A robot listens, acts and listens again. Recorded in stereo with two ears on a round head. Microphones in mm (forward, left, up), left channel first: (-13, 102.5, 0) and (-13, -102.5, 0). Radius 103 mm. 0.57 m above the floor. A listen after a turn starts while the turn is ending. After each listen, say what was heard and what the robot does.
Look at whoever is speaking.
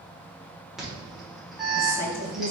The woman speaking: about 45° left or 135° left. Turn 45° left.
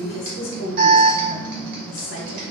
So it is at 80° left. Turn 80° left.
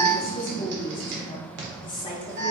The woman speaking is now 25° left. Turn 25° left.
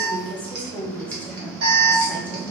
The woman speaking is now 10° left. Turn 10° left.
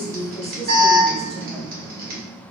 Found it: a woman speaking, straight ahead, 1 to 2 m away.